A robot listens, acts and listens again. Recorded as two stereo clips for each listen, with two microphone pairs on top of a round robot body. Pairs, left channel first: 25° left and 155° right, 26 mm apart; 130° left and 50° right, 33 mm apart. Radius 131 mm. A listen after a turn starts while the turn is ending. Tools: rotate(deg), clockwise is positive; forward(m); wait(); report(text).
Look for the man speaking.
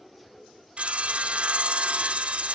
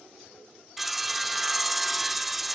wait()
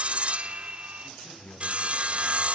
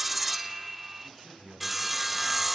rotate(-40)
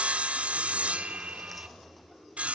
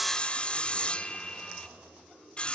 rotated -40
wait()
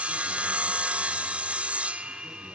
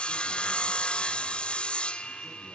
wait()
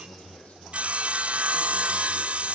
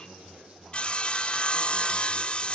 report("Facing the man speaking.")